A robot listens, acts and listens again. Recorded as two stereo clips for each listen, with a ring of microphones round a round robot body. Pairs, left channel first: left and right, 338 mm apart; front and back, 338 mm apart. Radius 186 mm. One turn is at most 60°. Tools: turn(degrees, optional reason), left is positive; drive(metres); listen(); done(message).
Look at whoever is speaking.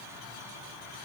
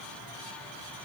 listen()
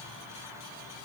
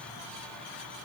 listen()
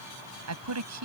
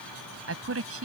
turn(degrees=-60, reason="The woman speaking: 130° right.")
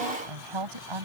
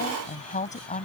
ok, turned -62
turn(degrees=-60, reason="The woman speaking is now 70° right.")
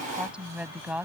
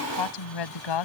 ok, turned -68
done("Found it: a woman speaking, straight ahead.")